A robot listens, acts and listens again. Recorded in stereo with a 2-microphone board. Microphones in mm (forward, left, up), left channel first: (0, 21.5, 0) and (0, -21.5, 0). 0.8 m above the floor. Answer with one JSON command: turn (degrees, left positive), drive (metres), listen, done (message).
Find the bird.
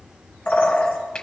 {"turn": 45}
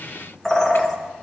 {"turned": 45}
{"turn": 10}
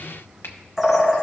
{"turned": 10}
{"done": "Facing the bird, 1 to 2 m away."}